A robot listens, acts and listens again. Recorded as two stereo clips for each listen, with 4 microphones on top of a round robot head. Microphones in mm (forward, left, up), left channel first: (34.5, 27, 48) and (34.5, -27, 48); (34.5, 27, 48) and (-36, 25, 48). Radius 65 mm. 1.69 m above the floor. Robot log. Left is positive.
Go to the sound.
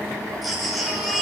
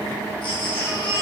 cmd fwd 1.0
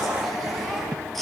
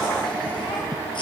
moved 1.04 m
cmd fwd 1.0
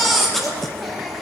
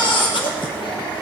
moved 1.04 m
cmd fwd 1.0
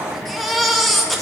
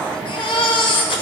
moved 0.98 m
cmd fwd 1.0
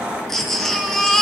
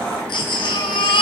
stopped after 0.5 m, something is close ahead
end: Arrived at the baby crying, straight ahead.